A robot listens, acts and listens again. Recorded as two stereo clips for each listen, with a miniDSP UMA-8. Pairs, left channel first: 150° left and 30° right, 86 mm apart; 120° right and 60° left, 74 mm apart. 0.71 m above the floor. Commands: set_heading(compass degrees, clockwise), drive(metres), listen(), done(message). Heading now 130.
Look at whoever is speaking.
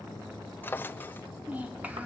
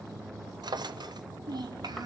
set_heading(85)
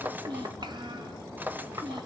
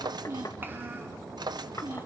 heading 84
done("Facing the child speaking.")